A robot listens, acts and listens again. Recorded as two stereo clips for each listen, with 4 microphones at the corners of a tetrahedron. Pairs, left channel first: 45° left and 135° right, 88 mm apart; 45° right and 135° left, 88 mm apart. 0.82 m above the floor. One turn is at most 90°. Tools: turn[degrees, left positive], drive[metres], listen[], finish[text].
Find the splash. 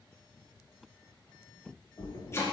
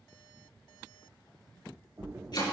Thought: The splash: 80° left.
Action: turn[80]
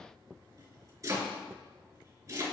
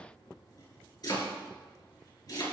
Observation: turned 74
Action: finish[I heard a splash from this way, but can't make it out now.]